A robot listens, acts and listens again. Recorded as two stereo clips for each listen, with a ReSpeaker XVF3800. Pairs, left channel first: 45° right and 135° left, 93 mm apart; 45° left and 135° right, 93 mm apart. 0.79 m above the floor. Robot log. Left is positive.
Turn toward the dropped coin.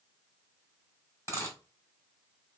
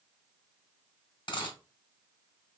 note: The dropped coin: 15° left.
cmd yaw +15
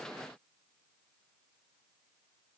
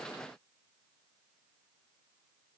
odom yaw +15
end: Facing where the dropped coin came from. I can't hear it now.